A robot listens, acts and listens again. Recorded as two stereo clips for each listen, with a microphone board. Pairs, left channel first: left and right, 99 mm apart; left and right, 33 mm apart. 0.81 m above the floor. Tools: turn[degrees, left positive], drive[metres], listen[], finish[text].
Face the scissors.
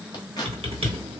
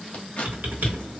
Thought: The scissors: about 40° left or 140° left.
Action: turn[40]
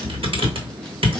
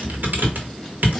Action: listen[]
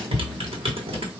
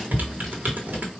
Action: listen[]
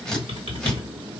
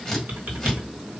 Action: finish[Facing the scissors.]